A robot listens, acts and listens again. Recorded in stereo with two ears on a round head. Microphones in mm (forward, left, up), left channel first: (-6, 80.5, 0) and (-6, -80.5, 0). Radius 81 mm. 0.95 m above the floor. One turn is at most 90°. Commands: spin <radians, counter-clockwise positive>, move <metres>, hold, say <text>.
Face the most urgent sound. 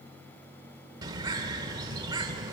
hold
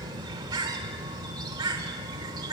hold
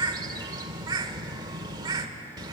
say I can't make out anything urgent, only a bird.